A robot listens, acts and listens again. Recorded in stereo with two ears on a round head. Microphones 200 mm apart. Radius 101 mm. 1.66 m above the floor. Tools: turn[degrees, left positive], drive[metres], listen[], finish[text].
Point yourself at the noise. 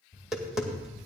Action: turn[30]
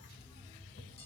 Thought: So it is at 150° left.
Action: turn[150]
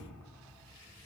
Action: listen[]
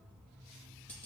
Thought: The tapping is now 10° left.
Action: turn[10]
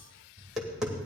Action: finish[Found it: tapping, straight ahead, 2 to 4 m away.]